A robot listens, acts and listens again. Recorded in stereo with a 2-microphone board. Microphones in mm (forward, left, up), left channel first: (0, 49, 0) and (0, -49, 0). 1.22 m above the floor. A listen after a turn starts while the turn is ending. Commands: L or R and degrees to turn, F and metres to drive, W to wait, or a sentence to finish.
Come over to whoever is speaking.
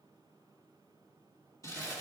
W
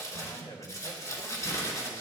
L45
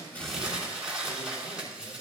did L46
W
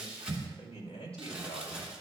L85
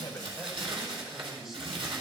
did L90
F1.0
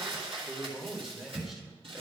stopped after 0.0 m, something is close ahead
Blocked. The man speaking is further on, straight ahead.